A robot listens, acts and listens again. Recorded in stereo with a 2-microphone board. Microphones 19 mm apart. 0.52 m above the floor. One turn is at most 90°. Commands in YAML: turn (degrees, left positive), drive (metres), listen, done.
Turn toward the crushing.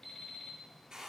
listen: true
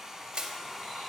turn: -90
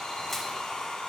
listen: true
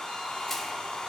listen: true
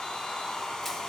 done: "Facing where the crushing came from. I can't hear it now."